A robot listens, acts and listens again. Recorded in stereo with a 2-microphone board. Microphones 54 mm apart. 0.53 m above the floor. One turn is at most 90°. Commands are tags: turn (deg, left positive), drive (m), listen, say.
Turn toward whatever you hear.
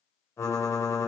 <turn deg="55"/>
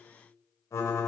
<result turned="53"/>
<turn deg="70"/>
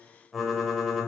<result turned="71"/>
<say>Found it: typing on a keyboard, straight ahead, 1 to 2 m away.</say>